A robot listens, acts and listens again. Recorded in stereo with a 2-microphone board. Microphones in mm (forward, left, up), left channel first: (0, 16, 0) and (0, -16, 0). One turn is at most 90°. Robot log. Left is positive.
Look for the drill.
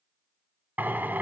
note: The drill: about 70° right or 110° right.
cmd yaw -70
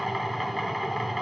end: Found it: a drill, straight ahead.